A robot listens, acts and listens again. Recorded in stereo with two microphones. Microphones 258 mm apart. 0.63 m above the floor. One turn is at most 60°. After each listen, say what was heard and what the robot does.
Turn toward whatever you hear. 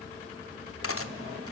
The cutlery clinking: about 60° left or 120° left. Turn 60° left.
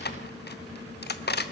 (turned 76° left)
So it is at 40° left. Turn 40° left.
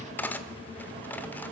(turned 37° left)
Found it: cutlery clinking, straight ahead, under 1 m away.